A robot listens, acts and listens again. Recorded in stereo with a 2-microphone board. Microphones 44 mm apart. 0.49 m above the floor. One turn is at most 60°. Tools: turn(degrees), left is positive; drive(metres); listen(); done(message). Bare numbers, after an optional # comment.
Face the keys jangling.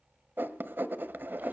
listen()
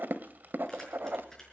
turn(30)
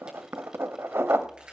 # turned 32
# So it is at 25° right.
turn(-25)
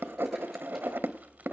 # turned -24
listen()
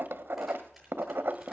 listen()
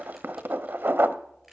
done("Found it: keys jangling, straight ahead, over 4 m away.")